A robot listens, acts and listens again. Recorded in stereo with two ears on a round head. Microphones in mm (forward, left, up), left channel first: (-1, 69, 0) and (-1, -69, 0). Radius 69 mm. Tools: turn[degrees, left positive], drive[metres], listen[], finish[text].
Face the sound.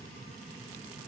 Action: listen[]
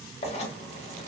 Thought: The writing: about 40° left or 140° left.
Action: turn[40]
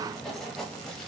Action: finish[Facing the writing, under 1 m away.]